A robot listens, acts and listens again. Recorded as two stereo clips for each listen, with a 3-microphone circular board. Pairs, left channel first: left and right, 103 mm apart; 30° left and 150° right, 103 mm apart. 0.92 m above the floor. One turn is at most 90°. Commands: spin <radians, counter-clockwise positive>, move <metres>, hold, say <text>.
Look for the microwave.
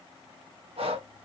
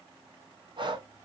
hold
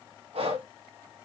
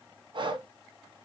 hold
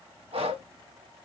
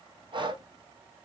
say I can't make out a microwave, only breathing.